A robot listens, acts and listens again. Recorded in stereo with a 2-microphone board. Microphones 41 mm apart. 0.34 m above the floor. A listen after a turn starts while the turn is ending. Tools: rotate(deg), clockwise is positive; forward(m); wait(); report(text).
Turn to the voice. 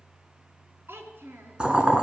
rotate(65)
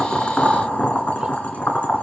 wait()
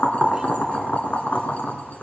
wait()
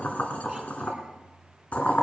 report("I heard a child speaking, but can't make it out now. It was about straight ahead or 50° right.")